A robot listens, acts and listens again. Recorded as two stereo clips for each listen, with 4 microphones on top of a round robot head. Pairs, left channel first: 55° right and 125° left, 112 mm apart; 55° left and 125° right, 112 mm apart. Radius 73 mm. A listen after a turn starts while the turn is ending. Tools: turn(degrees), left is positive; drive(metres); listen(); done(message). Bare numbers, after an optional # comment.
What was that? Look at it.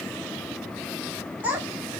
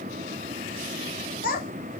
# The child speaking: 50° left.
turn(50)
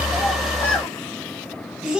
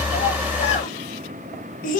# The child speaking is now 45° left.
turn(45)
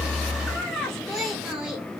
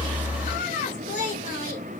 # The child speaking is now 35° left.
turn(35)
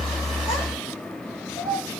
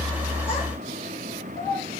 # The child speaking is now 15° left.
turn(15)
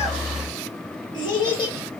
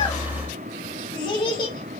done("Facing the child speaking, 1 to 2 m away.")